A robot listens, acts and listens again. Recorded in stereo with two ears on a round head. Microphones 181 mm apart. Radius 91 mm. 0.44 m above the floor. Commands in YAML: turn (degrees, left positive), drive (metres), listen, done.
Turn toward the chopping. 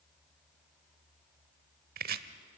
turn: -45
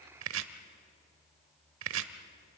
turn: -80
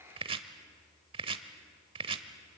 turn: -25
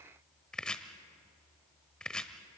done: "Facing the chopping, 1 to 2 m away."